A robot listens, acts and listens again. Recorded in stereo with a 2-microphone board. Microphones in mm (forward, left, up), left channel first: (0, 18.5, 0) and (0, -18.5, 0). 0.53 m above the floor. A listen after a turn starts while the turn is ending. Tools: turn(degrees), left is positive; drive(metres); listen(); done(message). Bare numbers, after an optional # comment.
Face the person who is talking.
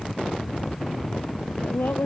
turn(90)
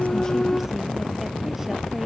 listen()
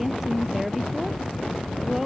# The woman speaking is now 10° right.
turn(-10)
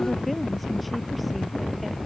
listen()
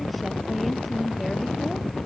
done("Found it: a woman speaking, straight ahead.")